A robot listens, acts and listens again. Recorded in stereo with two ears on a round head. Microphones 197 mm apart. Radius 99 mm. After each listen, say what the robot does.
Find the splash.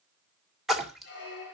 Turn 30° left.
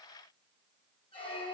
Keep listening.
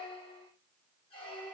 I heard a splash, but can't make it out now. It was about 30° right or 150° left.